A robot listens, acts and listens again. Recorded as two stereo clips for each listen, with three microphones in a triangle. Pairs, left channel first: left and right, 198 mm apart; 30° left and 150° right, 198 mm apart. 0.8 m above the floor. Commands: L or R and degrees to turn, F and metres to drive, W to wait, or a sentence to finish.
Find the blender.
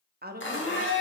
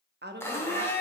L110
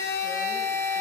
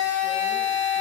L15
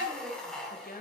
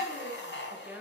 Found it: a blender, straight ahead, 1 to 2 m away.